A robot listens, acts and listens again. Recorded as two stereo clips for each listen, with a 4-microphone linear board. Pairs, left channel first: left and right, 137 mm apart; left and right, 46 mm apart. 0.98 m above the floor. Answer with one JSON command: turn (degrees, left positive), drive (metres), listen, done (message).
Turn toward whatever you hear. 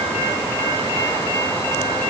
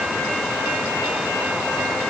{"listen": true}
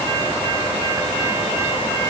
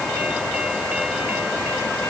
{"listen": true}
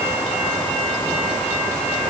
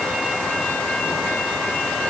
{"done": "I can't make out anything."}